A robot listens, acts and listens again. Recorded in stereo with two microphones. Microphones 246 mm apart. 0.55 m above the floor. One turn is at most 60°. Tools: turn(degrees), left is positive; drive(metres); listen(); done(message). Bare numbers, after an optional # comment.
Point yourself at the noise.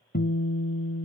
# The guitar: about 40° left or 140° left.
turn(40)
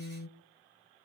# So it is at 95° left.
turn(60)
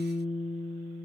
# The guitar is now 30° left.
turn(30)
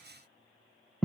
done("Found it: a guitar, straight ahead.")